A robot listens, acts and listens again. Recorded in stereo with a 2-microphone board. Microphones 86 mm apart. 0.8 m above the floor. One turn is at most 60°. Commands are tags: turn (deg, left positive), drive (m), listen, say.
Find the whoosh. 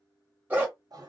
<listen/>
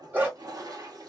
<listen/>
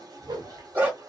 <turn deg="-60"/>
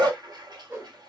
<turn deg="-35"/>
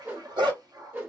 <turn deg="-25"/>
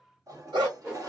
<turn deg="-15"/>
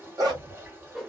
<say>Found it: a whoosh, straight ahead, under 1 m away.</say>